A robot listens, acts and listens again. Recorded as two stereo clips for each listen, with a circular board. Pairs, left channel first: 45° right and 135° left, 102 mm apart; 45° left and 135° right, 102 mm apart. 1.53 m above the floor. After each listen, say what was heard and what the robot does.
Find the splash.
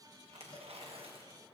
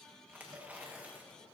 Keep listening.
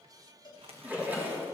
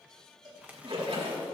The splash: 155° right. Turn 155° right.
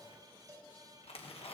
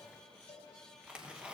I heard a splash from this way, but can't make it out now.